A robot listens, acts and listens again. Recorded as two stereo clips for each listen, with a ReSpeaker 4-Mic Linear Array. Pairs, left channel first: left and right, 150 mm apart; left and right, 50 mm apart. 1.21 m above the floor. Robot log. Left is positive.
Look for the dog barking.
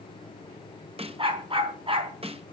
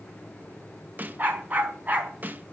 note: The dog barking: about 40° right or 140° right.
cmd yaw -40
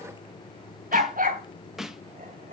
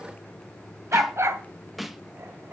note: So it is at 105° right.
cmd yaw -105
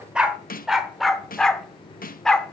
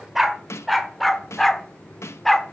end: Facing the dog barking, 1 to 2 m away.